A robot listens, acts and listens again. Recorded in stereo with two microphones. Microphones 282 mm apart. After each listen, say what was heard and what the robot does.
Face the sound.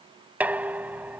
Turn 30° right.
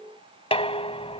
So it is at 25° left. Turn 25° left.
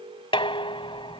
The dishes clattering is now 20° left. Turn 20° left.
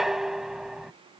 Found it: dishes clattering, straight ahead.